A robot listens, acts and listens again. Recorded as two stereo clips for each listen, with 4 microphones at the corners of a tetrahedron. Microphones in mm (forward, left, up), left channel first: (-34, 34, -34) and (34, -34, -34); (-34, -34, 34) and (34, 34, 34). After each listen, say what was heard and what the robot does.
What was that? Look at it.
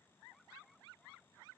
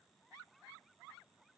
Keep listening.
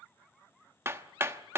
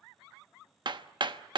The hammering: 15° left. Turn 15° left.
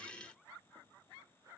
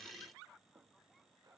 Keep listening.
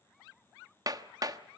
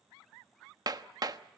Found it: hammering, straight ahead.